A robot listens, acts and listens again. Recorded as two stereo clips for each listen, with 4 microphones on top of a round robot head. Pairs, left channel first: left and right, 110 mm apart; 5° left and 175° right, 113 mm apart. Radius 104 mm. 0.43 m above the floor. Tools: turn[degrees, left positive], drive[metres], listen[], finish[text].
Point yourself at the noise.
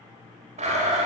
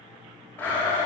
Thought: The blender: 70° right.
Action: turn[-70]
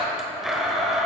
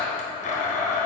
Action: finish[Facing the blender.]